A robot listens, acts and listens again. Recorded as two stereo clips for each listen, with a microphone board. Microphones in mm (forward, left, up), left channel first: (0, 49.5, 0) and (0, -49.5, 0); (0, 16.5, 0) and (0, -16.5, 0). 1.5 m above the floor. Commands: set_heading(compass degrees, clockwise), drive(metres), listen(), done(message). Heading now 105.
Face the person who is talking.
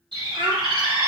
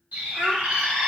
set_heading(160)
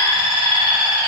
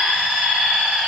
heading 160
listen()
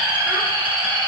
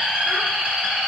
listen()
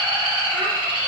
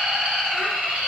done("I heard a child speaking, but can't make it out now. It was about straight ahead or 70° right.")